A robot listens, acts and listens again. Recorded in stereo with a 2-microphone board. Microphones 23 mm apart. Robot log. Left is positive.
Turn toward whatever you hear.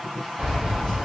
note: The keys jangling: about 55° right or 125° right.
cmd yaw -55
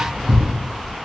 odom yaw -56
note: So it is at 75° right.
cmd yaw -75
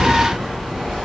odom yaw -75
note: The keys jangling is now 20° right.
cmd yaw -20
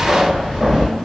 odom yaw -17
note: The keys jangling is now 10° right.
cmd yaw -10
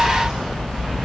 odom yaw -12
end: Found it: keys jangling, straight ahead.